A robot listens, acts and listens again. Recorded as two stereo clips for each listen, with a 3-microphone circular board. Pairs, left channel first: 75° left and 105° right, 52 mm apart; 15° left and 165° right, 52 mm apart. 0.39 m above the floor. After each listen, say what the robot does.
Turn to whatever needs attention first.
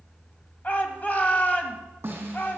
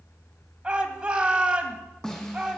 Turn 130° left.
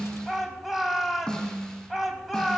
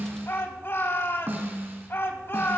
Turn 15° right.
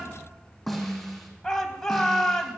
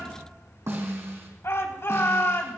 Facing the shout, 2 to 4 m away.